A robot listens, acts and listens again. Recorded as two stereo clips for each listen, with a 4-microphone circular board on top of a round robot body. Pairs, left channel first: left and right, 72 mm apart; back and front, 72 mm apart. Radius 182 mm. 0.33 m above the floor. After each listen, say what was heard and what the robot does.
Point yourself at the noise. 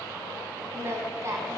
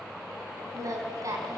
The singing: 40° right. Turn 40° right.
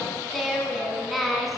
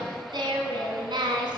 Facing the singing.